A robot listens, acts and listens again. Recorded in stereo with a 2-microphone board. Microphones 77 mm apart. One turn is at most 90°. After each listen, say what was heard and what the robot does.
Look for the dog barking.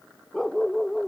Turn 30° left.
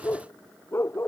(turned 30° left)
So it is at 150° left. Turn 90° left.
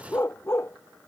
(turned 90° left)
The dog barking is now 30° left. Turn 30° left.
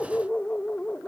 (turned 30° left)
The dog barking is now 15° left. Turn 15° left.
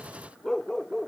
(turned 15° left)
Found it: a dog barking, straight ahead.